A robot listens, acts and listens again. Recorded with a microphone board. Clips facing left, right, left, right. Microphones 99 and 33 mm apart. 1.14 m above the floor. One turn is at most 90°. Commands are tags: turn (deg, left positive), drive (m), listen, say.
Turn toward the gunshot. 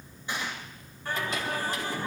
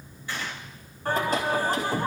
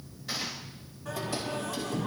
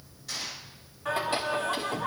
<turn deg="20"/>
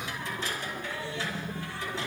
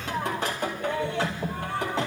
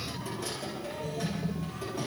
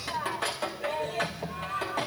<listen/>
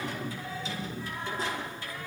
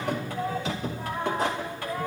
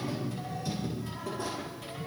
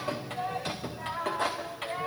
<say>I heard a gunshot, but can't make it out now. It was about straight ahead or 140° left.</say>